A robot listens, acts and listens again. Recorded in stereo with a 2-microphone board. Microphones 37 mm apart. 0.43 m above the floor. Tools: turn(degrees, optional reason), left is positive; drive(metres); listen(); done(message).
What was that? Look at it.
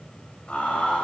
turn(degrees=35, reason="The laughter: about 35° left or 145° left.")
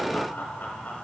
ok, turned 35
turn(degrees=105, reason="So it is at 105° left.")
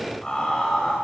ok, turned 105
turn(degrees=25, reason="The laughter is now 25° left.")
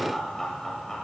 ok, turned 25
turn(degrees=15, reason="The laughter is now 15° left.")
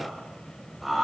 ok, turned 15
done("Facing the laughter, 1 to 2 m away.")